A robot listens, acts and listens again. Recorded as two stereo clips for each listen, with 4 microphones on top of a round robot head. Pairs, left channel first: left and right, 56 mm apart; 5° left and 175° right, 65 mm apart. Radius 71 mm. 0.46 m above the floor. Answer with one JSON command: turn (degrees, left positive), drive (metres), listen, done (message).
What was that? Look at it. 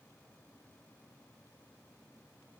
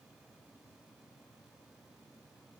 {"listen": true}
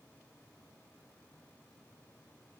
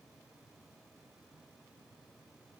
{"listen": true}
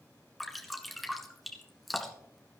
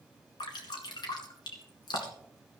{"done": "Facing the dripping, 2 to 4 m away."}